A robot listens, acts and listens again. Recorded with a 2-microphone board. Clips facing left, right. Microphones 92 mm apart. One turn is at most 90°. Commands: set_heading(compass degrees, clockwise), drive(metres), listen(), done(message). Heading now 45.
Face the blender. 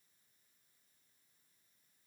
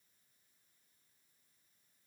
listen()
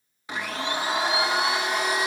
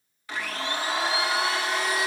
set_heading(25)
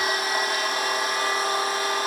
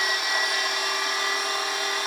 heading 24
set_heading(294)
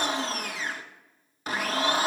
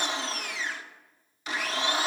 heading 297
set_heading(247)
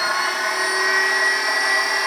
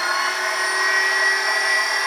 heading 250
done("Found it: a blender, straight ahead.")